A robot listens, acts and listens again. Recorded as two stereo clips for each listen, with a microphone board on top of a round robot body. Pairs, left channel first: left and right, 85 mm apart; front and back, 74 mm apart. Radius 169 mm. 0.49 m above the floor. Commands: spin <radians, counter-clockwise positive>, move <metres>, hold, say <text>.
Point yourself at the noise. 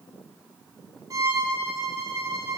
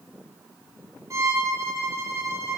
spin -2.36
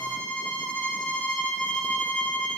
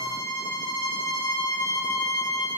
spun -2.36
spin 0.26
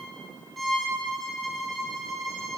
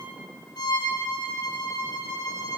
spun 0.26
say Found it: a violin, straight ahead.